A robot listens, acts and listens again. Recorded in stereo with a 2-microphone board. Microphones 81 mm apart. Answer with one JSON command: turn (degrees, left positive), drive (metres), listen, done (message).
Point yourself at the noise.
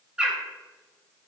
{"turn": -30}
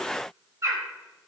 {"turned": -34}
{"turn": -135}
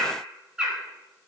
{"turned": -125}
{"turn": -10}
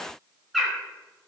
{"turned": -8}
{"done": "Found it: a bird, straight ahead, 2 to 4 m away."}